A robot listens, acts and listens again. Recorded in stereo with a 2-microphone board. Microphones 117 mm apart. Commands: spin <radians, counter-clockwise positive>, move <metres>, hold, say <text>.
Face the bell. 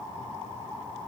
hold
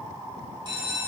spin -0.70
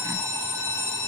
spin -1.75
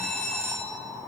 say Facing the bell, 2 to 4 m away.